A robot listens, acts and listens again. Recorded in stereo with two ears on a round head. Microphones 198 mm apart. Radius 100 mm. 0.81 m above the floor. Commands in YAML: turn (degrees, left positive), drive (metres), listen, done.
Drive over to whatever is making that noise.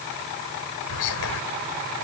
turn: 90
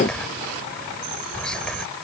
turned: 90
drive: 1.0
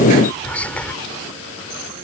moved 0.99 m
drive: 1.0
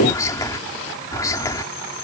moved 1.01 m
turn: 15
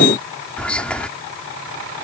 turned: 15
drive: 1.0
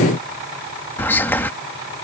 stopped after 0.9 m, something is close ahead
turn: 10
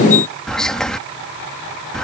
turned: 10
done: "Arrived at the whispering, straight ahead."